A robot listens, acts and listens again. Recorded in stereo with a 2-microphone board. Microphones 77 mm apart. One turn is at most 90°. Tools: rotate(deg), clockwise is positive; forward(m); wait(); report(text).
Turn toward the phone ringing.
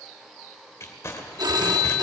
rotate(60)
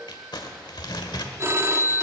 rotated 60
rotate(40)
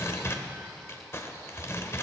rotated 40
wait()
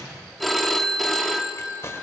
report("Found it: a phone ringing, straight ahead, under 1 m away.")